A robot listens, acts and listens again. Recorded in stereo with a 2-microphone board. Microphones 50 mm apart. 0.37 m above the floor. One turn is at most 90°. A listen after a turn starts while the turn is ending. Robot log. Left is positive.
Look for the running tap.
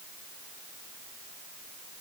cmd idle
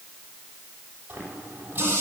note: The running tap: about 40° right or 140° right.
cmd yaw -40
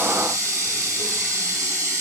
note: So it is at 105° right.
cmd yaw -90
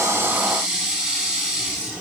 note: The running tap is now 20° right.
cmd yaw -20
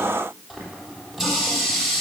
note: The running tap is now 10° right.
cmd yaw -10
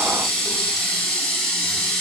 end: Facing the running tap.